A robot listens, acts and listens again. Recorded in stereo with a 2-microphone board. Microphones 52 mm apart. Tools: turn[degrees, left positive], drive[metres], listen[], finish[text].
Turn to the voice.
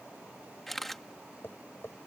Action: listen[]
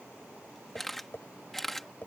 Action: listen[]
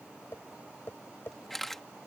Action: finish[I can't make out anyone speaking to turn to.]